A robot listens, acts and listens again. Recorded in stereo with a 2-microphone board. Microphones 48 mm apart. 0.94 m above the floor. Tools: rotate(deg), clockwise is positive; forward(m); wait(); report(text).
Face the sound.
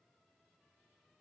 wait()
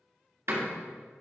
rotate(70)
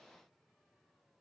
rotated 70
wait()
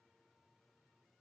report("I heard a door slam, but can't make it out now. It was about straight ahead or 40° right.")